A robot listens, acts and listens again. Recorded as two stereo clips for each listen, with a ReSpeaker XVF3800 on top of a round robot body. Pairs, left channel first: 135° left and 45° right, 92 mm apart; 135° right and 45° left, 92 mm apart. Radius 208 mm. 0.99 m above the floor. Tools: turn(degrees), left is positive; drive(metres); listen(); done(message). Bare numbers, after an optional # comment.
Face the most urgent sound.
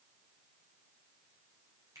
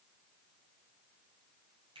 listen()
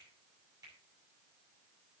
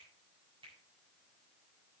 listen()
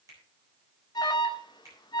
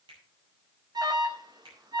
# The alarm: 90° left.
turn(90)
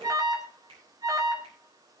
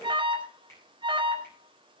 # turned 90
# The alarm is now 10° left.
turn(10)
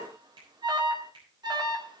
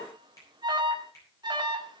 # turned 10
done("Facing the alarm.")